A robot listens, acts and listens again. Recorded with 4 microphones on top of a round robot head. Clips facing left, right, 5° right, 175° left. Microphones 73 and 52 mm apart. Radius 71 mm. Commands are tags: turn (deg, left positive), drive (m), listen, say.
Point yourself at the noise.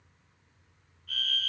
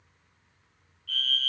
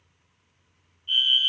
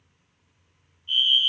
<turn deg="20"/>
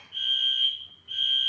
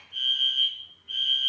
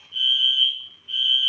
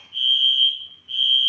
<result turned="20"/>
<say>Found it: a fire alarm, straight ahead.</say>